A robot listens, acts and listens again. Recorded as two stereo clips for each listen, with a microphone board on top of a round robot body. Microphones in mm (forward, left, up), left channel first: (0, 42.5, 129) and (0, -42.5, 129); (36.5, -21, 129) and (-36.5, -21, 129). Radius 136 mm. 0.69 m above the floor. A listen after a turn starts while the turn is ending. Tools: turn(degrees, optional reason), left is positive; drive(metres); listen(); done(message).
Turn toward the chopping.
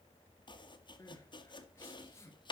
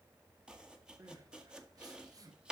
turn(degrees=100, reason="The chopping: 100° left.")
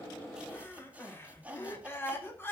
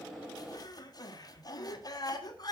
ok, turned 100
turn(degrees=-20, reason="The chopping is now 20° right.")
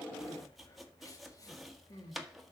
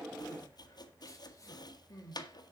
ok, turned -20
done("Facing the chopping.")